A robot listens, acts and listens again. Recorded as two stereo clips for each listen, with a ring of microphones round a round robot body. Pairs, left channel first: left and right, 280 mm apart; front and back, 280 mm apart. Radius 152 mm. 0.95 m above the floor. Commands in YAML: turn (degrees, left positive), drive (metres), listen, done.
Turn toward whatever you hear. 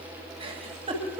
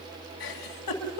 turn: -20
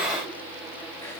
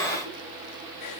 listen: true
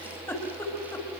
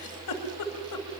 done: "Facing the giggle."